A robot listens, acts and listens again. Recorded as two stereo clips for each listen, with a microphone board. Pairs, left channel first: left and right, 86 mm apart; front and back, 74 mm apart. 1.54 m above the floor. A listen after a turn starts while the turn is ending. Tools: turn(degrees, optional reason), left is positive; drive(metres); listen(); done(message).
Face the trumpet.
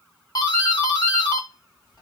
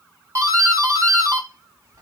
listen()
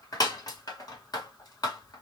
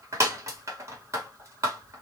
listen()
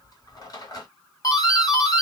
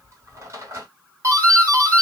done("I can't make out a trumpet, only a doorbell.")